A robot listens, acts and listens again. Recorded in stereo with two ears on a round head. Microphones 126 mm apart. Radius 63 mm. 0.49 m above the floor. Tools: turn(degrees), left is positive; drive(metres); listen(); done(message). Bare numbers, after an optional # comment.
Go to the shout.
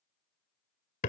listen()
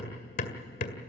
listen()
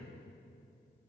done("I can't make out a shout, only hammering.")